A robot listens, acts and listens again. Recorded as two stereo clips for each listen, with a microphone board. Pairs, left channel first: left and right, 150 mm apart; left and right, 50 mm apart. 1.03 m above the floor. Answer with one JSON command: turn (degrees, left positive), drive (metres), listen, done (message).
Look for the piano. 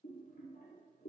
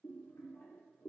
{"listen": true}
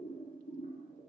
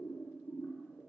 {"listen": true}
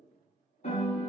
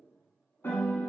{"turn": 50}
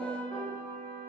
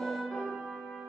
{"turn": 10}
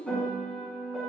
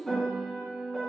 {"done": "Found it: a piano, straight ahead, 1 to 2 m away."}